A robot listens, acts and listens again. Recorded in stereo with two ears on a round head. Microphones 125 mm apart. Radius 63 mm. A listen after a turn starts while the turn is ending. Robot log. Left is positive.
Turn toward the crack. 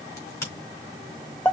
note: The crack: about 20° left or 160° left.
cmd yaw +20
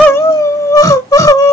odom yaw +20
cmd idle
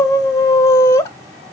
end: I heard a crack, but can't make it out now. It was about straight ahead or 140° left.